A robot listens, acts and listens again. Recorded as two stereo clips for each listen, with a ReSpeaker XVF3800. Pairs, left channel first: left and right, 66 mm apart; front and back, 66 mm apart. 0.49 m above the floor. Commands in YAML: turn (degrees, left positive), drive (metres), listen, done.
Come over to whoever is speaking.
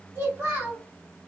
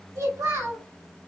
turn: -145
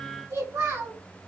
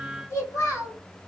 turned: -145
turn: -35
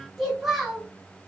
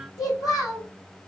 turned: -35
drive: 1.0
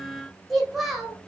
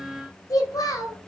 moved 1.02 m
drive: 1.0
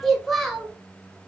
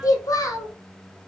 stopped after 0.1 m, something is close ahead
done: "I am next to the child speaking."